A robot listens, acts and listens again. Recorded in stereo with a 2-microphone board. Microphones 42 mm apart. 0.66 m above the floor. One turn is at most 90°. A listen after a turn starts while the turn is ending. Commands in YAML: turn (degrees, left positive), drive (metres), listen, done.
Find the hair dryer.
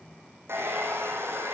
turn: -75
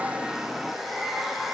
done: "Found it: a hair dryer, straight ahead, over 4 m away."